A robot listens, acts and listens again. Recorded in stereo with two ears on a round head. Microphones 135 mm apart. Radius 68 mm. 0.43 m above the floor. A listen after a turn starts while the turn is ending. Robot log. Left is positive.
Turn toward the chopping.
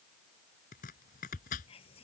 note: The chopping: about 55° left or 125° left.
cmd yaw +55
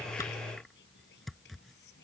end: Facing the chopping.